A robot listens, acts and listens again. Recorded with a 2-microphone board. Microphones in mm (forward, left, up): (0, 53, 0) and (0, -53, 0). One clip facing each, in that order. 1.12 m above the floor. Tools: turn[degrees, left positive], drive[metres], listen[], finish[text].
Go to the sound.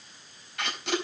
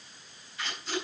Thought: The tape being pulled: about 75° left or 105° left.
Action: turn[75]
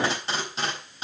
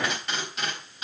Thought: So it is at 30° left.
Action: turn[30]
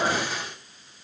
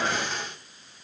Action: drive[1.0]
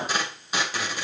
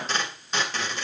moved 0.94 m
Thought: The tape being pulled is now 10° left.
Action: turn[10]
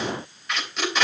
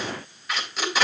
Action: drive[1.0]
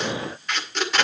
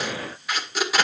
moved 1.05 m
Action: drive[1.0]
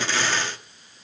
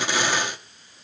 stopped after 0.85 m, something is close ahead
Thought: The tape being pulled is now 15° right.
Action: turn[-15]
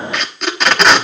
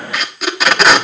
Action: finish[Arrived at the tape being pulled, straight ahead.]